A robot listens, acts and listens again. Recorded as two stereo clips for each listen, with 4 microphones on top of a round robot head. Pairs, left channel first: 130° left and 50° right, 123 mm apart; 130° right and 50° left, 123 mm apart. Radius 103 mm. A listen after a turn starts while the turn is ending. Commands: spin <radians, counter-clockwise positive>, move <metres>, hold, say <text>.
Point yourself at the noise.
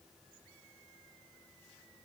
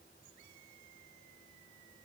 hold
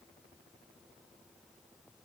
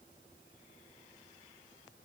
hold
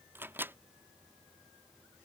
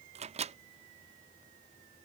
spin 0.44
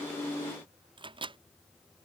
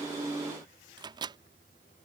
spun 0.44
say Facing the microwave.